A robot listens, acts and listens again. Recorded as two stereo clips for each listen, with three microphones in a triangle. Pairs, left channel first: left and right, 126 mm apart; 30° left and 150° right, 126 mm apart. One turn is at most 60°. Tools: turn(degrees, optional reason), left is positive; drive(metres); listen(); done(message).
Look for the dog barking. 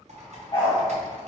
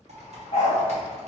turn(degrees=50, reason="The dog barking: 50° left.")
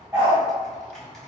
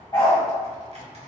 turn(degrees=-15, reason="The dog barking is now 15° right.")
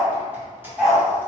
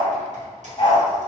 done("Found it: a dog barking, straight ahead, 1 to 2 m away.")